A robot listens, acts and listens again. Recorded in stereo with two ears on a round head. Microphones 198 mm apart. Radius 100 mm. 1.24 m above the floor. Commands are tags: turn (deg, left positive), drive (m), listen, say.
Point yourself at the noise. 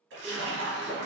<turn deg="-55"/>
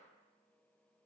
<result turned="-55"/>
<listen/>
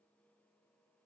<say>I heard a splash, but can't make it out now. It was about straight ahead or 70° right.</say>